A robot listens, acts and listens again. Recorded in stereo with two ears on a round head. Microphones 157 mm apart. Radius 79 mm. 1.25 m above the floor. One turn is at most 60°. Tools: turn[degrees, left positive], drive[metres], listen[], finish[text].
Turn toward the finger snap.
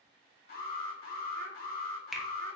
Action: turn[30]
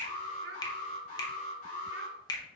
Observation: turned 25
Thought: So it is at 155° left.
Action: turn[60]
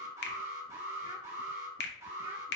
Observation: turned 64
Thought: The finger snap is now 90° left.
Action: turn[60]
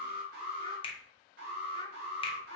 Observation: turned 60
Thought: The finger snap is now 30° left.
Action: turn[30]
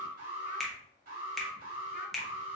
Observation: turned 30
Action: finish[Found it: a finger snap, straight ahead, under 1 m away.]